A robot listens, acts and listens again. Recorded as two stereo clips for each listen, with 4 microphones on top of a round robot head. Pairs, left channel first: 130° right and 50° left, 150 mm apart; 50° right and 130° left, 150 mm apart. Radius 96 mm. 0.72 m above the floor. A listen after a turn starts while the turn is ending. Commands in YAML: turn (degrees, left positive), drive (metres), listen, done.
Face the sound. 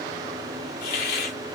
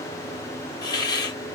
turn: -115
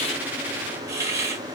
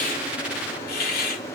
turn: -25
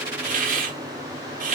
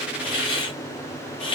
turn: 10
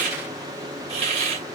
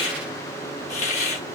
done: "Found it: a hiss, straight ahead."